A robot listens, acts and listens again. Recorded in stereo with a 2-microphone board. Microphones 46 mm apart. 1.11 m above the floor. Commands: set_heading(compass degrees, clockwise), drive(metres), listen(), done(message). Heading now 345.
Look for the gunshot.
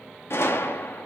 set_heading(275)
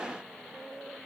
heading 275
listen()
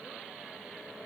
done("I heard a gunshot, but can't make it out now. It was about straight ahead or 40° left.")